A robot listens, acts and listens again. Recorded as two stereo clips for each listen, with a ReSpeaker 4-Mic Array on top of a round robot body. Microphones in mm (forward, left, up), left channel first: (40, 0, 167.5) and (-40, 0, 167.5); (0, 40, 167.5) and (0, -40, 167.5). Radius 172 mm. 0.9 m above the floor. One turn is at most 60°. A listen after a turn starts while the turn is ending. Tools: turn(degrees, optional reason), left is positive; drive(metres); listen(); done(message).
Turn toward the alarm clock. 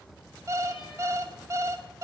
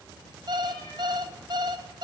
turn(degrees=-60, reason="The alarm clock: 125° right.")
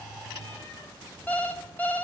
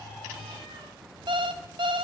turn(degrees=-60, reason="The alarm clock is now 70° right.")
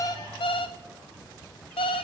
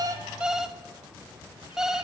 done("Found it: an alarm clock, straight ahead, 1 to 2 m away.")